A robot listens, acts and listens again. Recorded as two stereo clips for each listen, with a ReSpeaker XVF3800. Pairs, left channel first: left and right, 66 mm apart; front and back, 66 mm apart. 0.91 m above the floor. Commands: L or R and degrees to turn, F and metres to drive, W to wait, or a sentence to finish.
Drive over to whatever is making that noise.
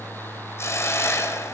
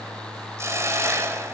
L135
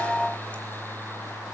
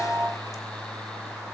W
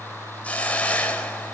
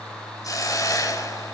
L20
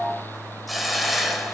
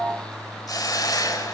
F1.0
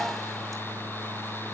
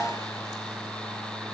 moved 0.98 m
W
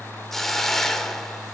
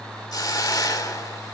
F1.0
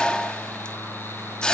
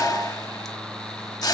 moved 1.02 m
L15
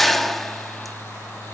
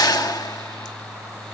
F1.0
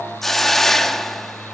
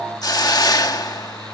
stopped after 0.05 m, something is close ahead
Arrived at the hiss, straight ahead.